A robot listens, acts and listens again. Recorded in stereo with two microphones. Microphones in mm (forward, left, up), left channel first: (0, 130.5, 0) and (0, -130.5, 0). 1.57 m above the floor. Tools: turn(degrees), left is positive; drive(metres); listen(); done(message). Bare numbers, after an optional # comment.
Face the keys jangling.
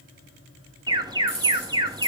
# The keys jangling: about 60° left or 120° left.
turn(60)
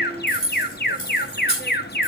# So it is at 50° left.
turn(50)
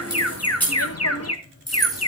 done("Found it: keys jangling, straight ahead, 2 to 4 m away.")